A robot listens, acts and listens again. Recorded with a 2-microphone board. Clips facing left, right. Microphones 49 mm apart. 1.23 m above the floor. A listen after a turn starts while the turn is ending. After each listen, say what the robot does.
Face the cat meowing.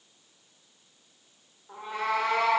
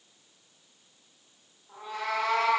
Turn 30° left.
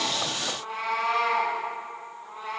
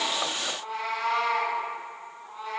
Turn 125° left.
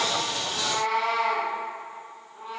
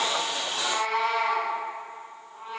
Turn 15° right.
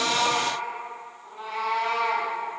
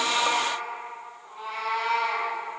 Found it: a cat meowing, straight ahead, 2 to 4 m away.